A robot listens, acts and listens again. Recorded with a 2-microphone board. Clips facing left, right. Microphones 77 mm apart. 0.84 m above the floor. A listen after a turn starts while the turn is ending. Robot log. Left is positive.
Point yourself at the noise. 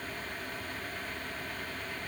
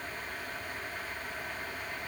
cmd idle
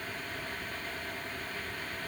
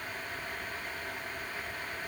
cmd idle
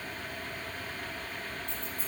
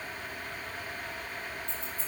cmd yaw -90
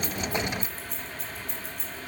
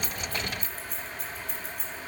end: Facing the keys jangling, over 4 m away.